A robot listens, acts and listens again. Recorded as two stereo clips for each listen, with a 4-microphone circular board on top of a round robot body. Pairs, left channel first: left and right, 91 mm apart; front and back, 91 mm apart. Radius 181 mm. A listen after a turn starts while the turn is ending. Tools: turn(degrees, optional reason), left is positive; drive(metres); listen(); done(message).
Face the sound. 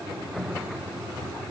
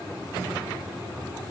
listen()
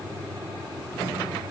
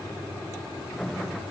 listen()
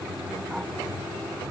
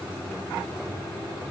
done("I can't make out anything to turn to.")